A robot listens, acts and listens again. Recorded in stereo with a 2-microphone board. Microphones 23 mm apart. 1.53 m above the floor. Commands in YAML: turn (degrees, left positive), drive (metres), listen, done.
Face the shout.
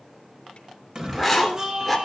turn: -40
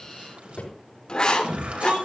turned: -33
turn: -110
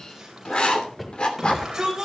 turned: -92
turn: -15
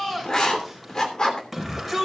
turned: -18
done: "Facing the shout, over 4 m away."